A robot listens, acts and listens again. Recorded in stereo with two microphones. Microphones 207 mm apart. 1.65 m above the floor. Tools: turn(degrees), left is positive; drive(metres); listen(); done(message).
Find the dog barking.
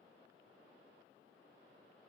listen()
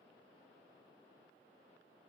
listen()
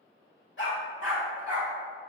turn(degrees=75)
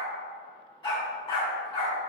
turn(degrees=20)
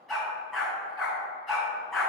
done("Found it: a dog barking, straight ahead.")